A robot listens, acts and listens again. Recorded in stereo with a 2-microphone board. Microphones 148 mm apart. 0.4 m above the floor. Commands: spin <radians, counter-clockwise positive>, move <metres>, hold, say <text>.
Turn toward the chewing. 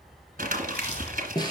spin 0.87
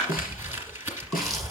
say Facing the chewing.